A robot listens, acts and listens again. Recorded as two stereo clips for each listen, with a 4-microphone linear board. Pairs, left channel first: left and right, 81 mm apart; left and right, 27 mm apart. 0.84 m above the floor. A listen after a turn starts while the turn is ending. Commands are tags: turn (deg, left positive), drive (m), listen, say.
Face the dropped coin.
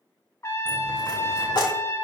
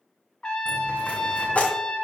<turn deg="60"/>
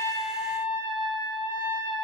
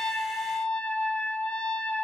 <listen/>
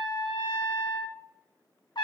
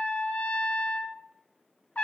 <say>I heard a dropped coin, but can't make it out now. It was about straight ahead or 60° left.</say>